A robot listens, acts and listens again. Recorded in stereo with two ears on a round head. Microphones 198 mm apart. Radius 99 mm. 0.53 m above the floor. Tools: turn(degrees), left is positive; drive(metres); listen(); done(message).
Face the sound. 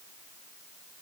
listen()
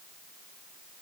listen()
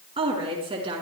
turn(degrees=-25)
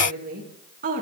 turn(degrees=-135)
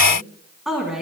done("Facing the woman speaking, over 4 m away.")